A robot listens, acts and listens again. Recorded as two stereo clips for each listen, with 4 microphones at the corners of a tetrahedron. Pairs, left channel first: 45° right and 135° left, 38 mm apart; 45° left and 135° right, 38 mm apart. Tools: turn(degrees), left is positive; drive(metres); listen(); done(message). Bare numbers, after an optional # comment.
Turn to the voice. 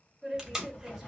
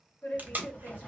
# The woman speaking: 55° left.
turn(55)
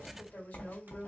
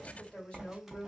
# The woman speaking is now 10° right.
turn(-10)
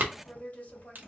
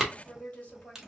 done("Found it: a woman speaking, straight ahead.")